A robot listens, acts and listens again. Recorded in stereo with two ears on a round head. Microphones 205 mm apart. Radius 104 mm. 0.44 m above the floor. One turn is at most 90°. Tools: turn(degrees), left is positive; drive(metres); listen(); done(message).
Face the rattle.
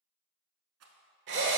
turn(degrees=-65)
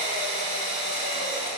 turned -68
listen()
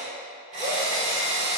listen()
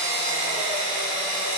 done("I heard a rattle, but can't make it out now. It was about straight ahead or 45° right.")